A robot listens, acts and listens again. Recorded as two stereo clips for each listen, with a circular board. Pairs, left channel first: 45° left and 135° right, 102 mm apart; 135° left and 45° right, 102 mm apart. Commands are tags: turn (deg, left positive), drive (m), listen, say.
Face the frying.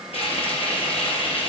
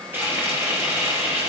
<turn deg="25"/>
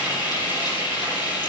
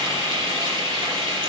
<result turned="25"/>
<say>Found it: frying, straight ahead, over 4 m away.</say>